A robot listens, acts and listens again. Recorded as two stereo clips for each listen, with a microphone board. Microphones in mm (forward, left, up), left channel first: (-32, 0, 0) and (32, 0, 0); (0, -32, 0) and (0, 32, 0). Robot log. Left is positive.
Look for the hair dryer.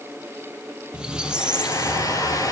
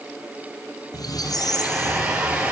note: The hair dryer: 165° left.
cmd yaw +165
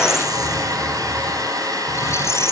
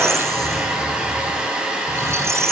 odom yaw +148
note: The hair dryer is now 15° left.
cmd yaw +15
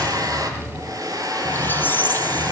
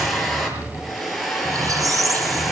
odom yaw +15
end: Facing the hair dryer.